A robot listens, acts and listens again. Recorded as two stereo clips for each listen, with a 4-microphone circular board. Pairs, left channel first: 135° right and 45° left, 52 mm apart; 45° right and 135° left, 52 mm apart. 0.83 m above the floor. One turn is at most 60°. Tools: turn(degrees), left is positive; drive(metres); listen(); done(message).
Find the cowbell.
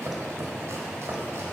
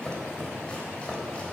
listen()
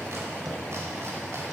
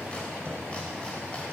listen()
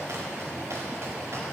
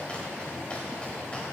done("I can't make out a cowbell to turn to.")